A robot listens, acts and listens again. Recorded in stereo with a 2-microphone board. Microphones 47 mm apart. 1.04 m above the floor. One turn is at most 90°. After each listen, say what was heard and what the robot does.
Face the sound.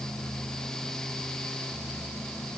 Keep listening.
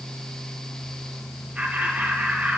The laughter: about 35° right or 145° right. Turn 35° right.
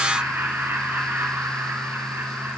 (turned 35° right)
So it is at 100° right. Turn 90° right.
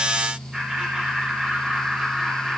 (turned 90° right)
The laughter is now 15° right. Turn 15° right.
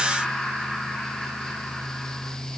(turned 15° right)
Facing the laughter.